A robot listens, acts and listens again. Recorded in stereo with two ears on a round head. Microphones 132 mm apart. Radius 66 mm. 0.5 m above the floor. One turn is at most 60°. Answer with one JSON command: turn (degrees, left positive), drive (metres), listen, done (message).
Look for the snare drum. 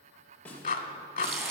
{"turn": 30}
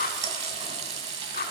{"listen": true}
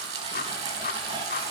{"listen": true}
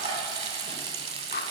{"done": "I heard a snare drum, but can't make it out now. It was about 20° right or 140° left."}